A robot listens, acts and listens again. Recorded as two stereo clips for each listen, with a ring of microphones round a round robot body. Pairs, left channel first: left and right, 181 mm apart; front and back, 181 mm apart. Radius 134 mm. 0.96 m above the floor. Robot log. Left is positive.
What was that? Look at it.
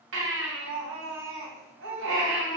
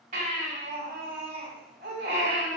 note: The baby crying: 115° right.
cmd yaw -115
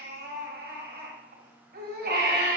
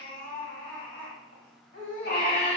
note: The baby crying is now 55° right.
cmd yaw -55
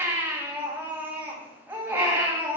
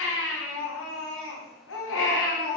note: The baby crying is now 10° right.
cmd yaw -10
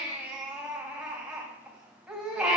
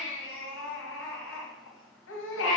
end: Facing the baby crying.